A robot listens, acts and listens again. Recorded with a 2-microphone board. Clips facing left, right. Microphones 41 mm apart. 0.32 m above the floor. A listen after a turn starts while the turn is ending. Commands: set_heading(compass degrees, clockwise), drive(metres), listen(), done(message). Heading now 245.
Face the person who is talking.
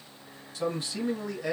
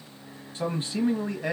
set_heading(275)
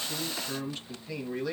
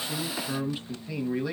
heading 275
set_heading(285)
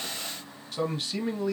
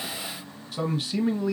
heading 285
done("Found it: a man speaking, straight ahead, 1 to 2 m away.")